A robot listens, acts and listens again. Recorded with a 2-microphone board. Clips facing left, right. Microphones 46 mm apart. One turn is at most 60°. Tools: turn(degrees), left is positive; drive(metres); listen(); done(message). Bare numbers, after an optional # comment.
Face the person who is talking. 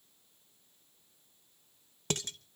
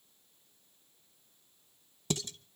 listen()
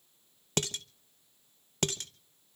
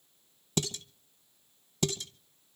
listen()
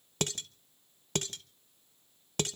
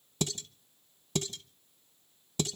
done("I can't make out anyone speaking, only dishes clattering.")